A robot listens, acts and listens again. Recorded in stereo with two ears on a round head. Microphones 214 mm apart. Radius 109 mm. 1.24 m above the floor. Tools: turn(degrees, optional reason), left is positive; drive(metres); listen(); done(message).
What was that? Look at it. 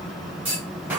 turn(degrees=-30)
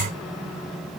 listen()
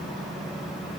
done("I heard a clunk, but can't make it out now. It was about 25° left or 145° right.")